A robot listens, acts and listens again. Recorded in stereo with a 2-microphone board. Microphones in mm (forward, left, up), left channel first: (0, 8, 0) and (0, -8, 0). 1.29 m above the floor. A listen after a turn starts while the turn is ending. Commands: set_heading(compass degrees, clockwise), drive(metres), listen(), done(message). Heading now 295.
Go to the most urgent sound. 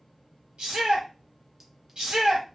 set_heading(5)
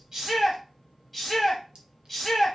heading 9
drive(1.0)
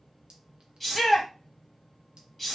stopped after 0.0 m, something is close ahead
done("Something is in my way. I am facing the shout but have not reached it.")